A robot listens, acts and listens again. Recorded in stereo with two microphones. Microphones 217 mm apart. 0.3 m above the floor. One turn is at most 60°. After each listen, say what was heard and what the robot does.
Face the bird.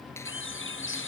The bird: about 60° left or 120° left. Turn 60° left.
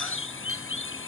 So it is at 60° left. Turn 60° left.
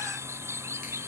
The bird is now 10° right. Turn 10° right.
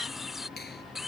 Found it: a bird, straight ahead.